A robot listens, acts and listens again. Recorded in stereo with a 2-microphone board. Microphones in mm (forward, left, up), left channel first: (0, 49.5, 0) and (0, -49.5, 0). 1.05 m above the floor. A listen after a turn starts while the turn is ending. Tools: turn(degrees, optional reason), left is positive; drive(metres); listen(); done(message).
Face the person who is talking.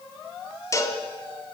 listen()
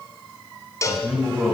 turn(degrees=-30)
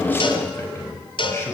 turn(degrees=25, reason="So it is at 25° left.")
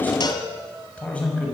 turn(degrees=15, reason="The man speaking is now 15° left.")
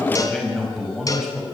done("Found it: a man speaking, straight ahead.")